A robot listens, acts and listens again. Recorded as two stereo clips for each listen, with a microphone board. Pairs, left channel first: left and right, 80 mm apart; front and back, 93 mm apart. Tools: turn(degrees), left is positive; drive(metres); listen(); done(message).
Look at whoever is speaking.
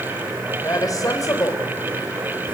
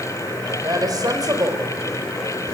turn(degrees=130)
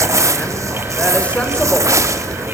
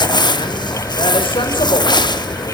listen()
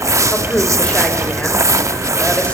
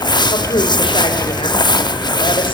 turn(degrees=15)
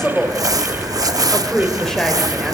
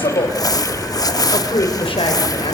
done("Facing the woman speaking, 2 to 4 m away.")